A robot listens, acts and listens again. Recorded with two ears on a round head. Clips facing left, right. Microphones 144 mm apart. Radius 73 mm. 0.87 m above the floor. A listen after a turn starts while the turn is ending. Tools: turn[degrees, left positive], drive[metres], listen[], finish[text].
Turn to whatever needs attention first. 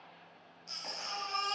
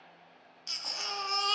Action: turn[-90]
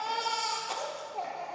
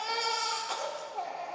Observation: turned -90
Action: finish[Facing the baby crying, 1 to 2 m away.]